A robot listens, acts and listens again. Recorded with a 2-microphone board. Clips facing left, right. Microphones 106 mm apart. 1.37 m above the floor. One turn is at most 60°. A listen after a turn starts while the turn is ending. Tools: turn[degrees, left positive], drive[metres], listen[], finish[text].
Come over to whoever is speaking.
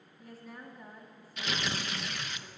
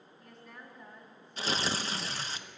Action: turn[30]
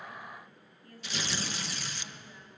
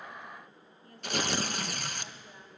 Thought: So it is at 25° right.
Action: turn[-25]
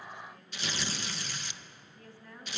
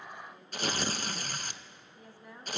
Thought: The woman speaking is now 15° right.
Action: turn[-15]
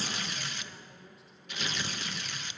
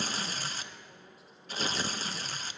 Action: listen[]
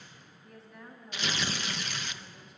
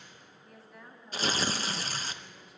Action: drive[1.0]
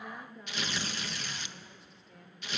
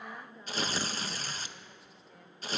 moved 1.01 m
Action: drive[1.0]
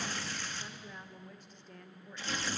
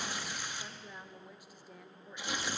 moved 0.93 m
Thought: The woman speaking is now 10° right.
Action: turn[-10]
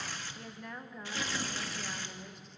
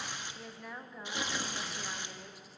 Action: drive[1.0]
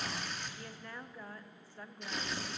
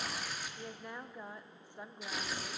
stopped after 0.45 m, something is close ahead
Thought: The woman speaking is now 20° right.
Action: turn[-20]
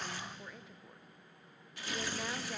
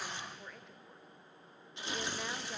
Action: finish[I am next to the woman speaking.]